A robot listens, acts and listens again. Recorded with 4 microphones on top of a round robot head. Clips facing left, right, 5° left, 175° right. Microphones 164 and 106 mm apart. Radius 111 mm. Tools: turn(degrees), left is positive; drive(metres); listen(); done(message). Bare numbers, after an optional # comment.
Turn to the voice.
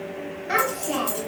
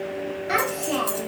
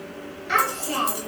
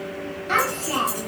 # The child speaking: 140° right.
turn(-140)
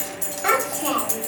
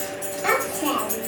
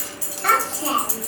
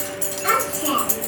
# The child speaking is now 10° right.
turn(-10)
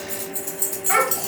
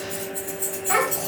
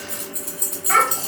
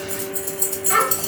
done("Facing the child speaking, 1 to 2 m away.")